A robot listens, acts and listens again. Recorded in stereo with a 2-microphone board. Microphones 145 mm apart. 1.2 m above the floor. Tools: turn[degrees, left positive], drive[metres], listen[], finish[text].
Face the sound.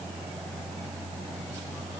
Action: listen[]
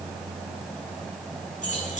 Thought: The keys jangling: about 65° left or 115° left.
Action: turn[65]
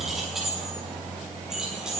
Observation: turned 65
Action: finish[Found it: keys jangling, straight ahead, over 4 m away.]